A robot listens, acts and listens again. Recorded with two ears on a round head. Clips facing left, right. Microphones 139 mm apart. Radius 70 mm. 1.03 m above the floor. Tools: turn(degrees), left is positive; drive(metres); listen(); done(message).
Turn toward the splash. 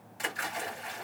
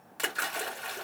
turn(degrees=-90)
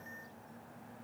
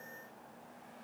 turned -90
done("I heard a splash from this way, but can't make it out now.")